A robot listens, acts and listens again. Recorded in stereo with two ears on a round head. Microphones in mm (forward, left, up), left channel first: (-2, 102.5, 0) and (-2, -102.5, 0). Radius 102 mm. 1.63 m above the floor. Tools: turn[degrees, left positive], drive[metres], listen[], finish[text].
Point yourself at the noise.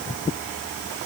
Action: listen[]
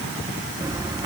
Thought: The bird: about 15° right or 165° right.
Action: turn[-15]
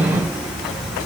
Action: finish[Found it: a bird, straight ahead.]